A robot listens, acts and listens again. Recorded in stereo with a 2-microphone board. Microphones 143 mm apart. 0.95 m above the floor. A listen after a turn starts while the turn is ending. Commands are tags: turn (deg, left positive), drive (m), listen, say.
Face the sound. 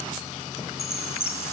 <turn deg="45"/>
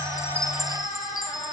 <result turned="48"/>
<say>Found it: a chime, straight ahead, 1 to 2 m away.</say>